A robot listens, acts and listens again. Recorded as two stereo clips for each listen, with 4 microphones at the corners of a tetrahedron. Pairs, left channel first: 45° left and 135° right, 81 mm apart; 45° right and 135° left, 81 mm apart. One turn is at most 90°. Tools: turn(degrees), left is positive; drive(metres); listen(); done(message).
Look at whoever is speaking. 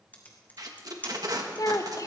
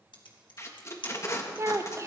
turn(degrees=85)
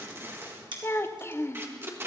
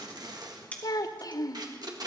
turn(degrees=-10)
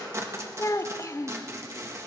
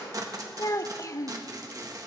done("Found it: a child speaking, straight ahead.")